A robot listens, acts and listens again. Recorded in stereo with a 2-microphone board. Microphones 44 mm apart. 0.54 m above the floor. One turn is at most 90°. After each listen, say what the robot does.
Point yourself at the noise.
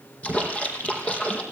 Turn 25° left.
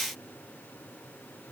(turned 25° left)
Keep listening.
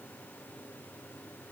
I heard a splash, but can't make it out now. It was about straight ahead or 130° left.